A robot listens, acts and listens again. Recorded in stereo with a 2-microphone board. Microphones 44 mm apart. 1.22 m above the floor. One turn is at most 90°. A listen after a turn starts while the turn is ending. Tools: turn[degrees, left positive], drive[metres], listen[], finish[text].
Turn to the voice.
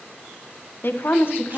Thought: The woman speaking: about 55° left or 125° left.
Action: turn[55]
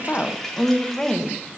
Thought: So it is at 20° left.
Action: turn[20]
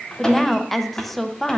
Action: finish[Found it: a woman speaking, straight ahead.]